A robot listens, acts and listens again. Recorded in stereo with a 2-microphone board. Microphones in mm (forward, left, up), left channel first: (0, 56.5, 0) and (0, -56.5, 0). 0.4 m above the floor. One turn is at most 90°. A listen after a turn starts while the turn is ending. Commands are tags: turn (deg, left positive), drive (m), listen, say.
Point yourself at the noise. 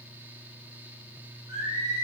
<turn deg="-25"/>
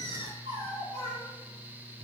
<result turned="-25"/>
<turn deg="-90"/>
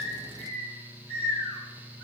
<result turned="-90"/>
<turn deg="-60"/>
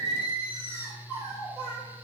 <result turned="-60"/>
<turn deg="-20"/>
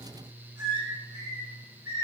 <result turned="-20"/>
<say>Facing the singing, over 4 m away.</say>